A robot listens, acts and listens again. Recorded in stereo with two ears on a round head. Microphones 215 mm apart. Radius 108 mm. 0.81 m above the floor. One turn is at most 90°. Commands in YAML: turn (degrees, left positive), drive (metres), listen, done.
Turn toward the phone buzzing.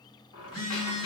turn: 70
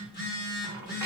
turn: 45
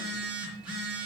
done: "Facing the phone buzzing, 2 to 4 m away."